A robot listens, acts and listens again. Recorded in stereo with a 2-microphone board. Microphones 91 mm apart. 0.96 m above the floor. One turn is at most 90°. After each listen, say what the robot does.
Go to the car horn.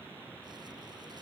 Keep listening.
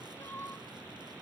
Keep listening.
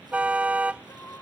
Turn 30° right.
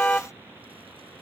Turn 15° left.
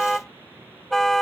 Drive 1.0 m forward.
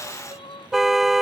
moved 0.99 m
Drive 1.0 m forward.
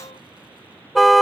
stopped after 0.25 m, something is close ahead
Arrived at the car horn, straight ahead.